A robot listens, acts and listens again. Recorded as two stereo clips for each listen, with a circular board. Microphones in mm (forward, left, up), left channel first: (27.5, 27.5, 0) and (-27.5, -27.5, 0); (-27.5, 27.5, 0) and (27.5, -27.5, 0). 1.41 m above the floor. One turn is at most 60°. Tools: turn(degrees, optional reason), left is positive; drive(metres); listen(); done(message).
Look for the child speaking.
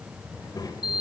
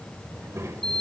turn(degrees=10, reason="The child speaking: 10° left.")
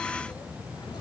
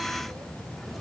listen()
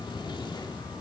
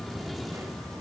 listen()
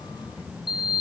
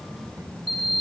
turn(degrees=10, reason="The child speaking is now 10° left.")
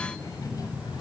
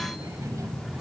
done("Facing the child speaking, over 4 m away.")